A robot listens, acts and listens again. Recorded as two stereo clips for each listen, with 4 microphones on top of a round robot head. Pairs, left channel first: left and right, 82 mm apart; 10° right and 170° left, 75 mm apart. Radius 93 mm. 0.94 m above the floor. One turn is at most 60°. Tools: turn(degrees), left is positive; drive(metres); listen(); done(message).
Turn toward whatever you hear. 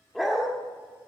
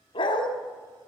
done("Facing the dog barking.")